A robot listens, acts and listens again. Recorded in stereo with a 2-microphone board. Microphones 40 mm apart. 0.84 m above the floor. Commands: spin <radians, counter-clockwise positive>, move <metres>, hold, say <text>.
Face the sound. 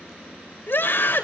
spin 0.96
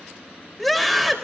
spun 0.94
say Facing the scream, 2 to 4 m away.